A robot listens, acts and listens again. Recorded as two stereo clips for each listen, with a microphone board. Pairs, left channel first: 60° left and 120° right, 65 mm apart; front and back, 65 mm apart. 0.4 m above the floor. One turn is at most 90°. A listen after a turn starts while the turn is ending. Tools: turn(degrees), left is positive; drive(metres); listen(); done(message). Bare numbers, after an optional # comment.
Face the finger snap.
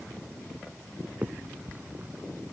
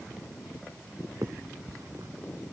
# The finger snap: straight behind.
turn(90)
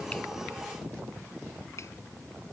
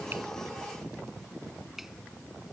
# Nothing new. It was at 90° left.
turn(90)
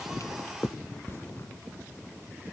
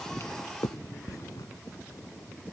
# The finger snap is now 15° left.
turn(15)
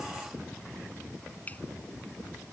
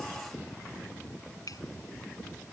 done("Facing the finger snap.")